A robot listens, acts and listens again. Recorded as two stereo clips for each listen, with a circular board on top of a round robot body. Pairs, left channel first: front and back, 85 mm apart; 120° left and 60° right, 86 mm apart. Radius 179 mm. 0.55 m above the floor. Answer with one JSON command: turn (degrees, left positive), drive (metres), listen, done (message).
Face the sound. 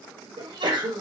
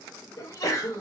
{"turn": 165}
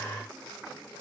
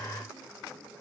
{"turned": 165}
{"done": "Facing where the sneeze came from. I can't hear it now."}